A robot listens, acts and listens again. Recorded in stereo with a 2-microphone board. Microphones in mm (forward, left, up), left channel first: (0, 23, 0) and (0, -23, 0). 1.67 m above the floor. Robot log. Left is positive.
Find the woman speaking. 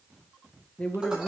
note: The woman speaking: about 30° left or 150° left.
cmd yaw +30
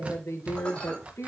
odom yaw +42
note: So it is at 90° left.
cmd yaw +90
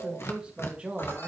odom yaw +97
note: The woman speaking is now 30° right.
cmd yaw -30
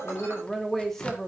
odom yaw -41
end: Found it: a woman speaking, straight ahead, 2 to 4 m away.